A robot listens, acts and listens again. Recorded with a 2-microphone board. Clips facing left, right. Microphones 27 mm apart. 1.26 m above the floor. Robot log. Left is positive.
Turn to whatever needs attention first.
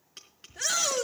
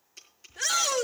cmd yaw +30
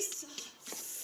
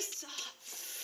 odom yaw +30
note: So it is at 35° right.
cmd yaw -35
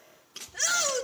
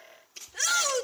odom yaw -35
end: Facing the shout, 2 to 4 m away.